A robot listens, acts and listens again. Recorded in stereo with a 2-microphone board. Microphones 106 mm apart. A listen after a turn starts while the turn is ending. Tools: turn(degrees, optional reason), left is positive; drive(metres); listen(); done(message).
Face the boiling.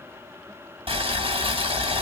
turn(degrees=-55, reason="The boiling: about 55° right or 125° right.")
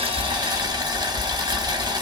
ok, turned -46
turn(degrees=-55, reason="So it is at 55° right.")
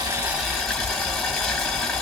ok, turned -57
done("Found it: boiling, straight ahead.")